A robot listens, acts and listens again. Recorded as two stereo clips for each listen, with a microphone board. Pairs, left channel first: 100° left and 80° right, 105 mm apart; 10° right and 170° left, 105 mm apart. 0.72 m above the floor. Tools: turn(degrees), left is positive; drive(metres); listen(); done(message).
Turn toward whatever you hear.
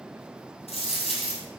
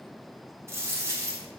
turn(degrees=105)
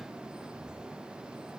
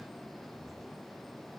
done("I heard a dropped coin from this way, but can't make it out now.")